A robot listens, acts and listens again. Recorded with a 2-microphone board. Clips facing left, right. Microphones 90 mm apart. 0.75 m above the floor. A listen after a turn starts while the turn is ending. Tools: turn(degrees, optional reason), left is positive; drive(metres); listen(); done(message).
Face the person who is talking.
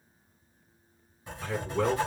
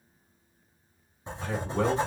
turn(degrees=-60, reason="The man speaking: about 60° right or 120° right.")
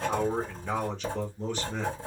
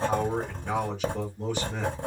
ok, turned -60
turn(degrees=-10, reason="So it is at 10° right.")
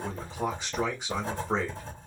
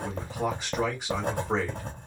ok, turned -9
done("Found it: a man speaking, straight ahead, 2 to 4 m away.")